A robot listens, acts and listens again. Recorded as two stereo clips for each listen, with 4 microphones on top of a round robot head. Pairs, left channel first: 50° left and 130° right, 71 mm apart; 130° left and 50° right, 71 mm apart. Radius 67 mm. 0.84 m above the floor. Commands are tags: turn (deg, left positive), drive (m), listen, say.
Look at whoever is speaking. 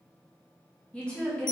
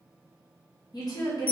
<turn deg="125"/>
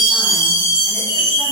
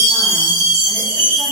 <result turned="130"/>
<listen/>
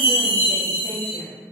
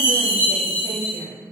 <say>Found it: a woman speaking, straight ahead, 1 to 2 m away.</say>